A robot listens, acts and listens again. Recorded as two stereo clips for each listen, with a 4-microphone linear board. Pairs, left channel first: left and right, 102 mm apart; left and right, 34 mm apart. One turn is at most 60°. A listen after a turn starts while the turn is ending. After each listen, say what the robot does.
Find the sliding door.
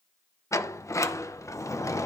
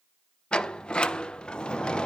Turn 30° left.
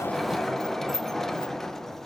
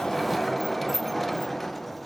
Facing the sliding door.